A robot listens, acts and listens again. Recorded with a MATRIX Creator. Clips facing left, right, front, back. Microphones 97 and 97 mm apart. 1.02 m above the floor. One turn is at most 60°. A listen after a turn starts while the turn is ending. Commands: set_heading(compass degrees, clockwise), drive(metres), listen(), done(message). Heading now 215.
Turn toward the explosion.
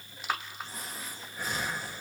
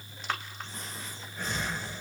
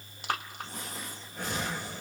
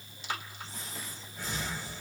listen()
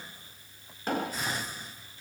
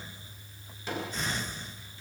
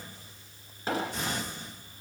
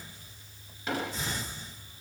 set_heading(160)
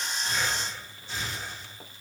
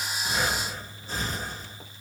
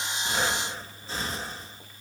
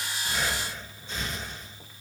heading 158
done("I heard an explosion from this way, but can't make it out now.")